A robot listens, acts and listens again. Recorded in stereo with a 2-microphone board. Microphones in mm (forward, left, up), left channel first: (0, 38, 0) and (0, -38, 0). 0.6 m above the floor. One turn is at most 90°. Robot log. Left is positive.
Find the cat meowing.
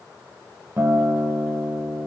cmd idle
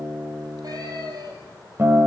note: The cat meowing: about 55° right or 125° right.
cmd yaw -55
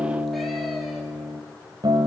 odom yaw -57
cmd idle
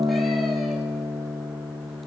cmd idle
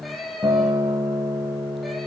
end: Facing the cat meowing.